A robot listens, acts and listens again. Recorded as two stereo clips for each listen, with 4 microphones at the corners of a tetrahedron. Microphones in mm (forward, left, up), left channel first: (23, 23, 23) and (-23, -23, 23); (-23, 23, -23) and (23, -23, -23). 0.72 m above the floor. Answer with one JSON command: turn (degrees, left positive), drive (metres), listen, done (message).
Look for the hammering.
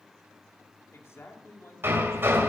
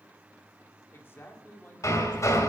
{"turn": 175}
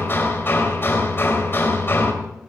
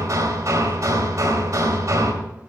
{"turn": -10}
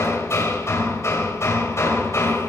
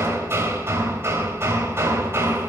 {"done": "Facing the hammering."}